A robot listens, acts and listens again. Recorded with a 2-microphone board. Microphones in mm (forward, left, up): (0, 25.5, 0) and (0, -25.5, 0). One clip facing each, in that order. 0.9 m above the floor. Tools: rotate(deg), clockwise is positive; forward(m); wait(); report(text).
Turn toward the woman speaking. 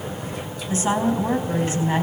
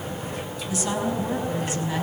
rotate(-40)
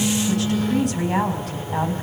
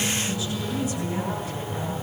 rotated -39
rotate(-100)
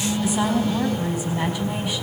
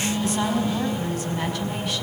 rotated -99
report("Facing the woman speaking.")